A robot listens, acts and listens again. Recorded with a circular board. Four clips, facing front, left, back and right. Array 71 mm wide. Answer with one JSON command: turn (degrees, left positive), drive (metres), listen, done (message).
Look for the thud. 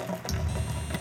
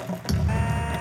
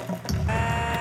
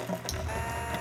{"turn": 115}
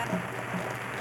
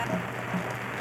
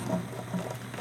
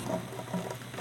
{"done": "I heard a thud from this way, but can't make it out now."}